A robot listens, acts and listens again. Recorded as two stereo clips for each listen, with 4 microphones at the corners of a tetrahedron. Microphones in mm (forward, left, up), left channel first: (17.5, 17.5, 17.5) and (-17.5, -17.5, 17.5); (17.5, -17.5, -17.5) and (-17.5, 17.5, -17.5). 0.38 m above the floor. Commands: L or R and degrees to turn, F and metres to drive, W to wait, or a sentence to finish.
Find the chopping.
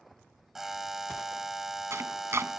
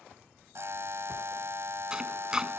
R150
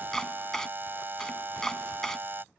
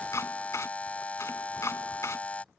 R35
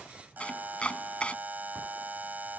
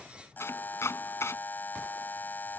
R20
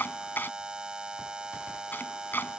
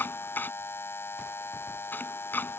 Found it: chopping, straight ahead.